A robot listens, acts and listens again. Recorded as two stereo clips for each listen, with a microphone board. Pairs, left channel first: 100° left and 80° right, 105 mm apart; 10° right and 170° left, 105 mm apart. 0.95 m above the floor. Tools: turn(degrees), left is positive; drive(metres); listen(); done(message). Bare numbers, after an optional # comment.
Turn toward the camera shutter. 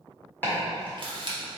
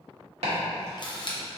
# The camera shutter: 50° right.
turn(-50)
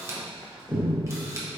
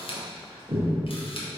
# The camera shutter is now 20° right.
turn(-20)
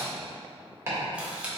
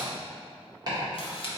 done("Found it: a camera shutter, straight ahead, under 1 m away.")